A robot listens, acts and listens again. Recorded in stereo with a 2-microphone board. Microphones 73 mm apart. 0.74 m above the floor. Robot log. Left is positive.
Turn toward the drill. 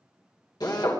note: The drill: about 60° left or 120° left.
cmd yaw +60
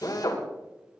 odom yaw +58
note: So it is at 55° left.
cmd yaw +55
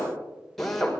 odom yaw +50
end: Found it: a drill, straight ahead.